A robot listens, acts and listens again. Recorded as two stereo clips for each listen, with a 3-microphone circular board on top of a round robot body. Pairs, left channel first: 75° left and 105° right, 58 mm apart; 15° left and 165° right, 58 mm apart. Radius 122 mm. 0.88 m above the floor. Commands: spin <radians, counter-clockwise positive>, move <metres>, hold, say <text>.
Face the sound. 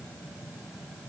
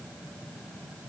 hold
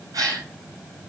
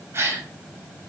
spin -2.01
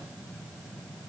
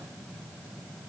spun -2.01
say Facing where the gasp came from. I can't hear it now.